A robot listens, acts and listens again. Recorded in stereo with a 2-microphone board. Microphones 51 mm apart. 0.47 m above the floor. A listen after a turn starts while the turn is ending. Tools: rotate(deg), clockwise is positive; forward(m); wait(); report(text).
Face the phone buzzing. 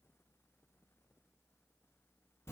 wait()
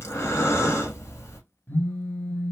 rotate(-45)
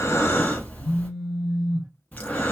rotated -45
report("Facing the phone buzzing, under 1 m away.")